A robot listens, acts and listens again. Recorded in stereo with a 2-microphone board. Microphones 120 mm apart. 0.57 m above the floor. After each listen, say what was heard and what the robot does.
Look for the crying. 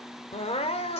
The crying: about 55° left or 125° left. Turn 55° left.
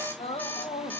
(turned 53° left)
So it is at 65° left. Turn 65° left.
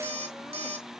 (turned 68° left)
Keep listening.
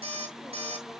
Keep listening.
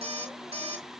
Facing where the crying came from. I can't hear it now.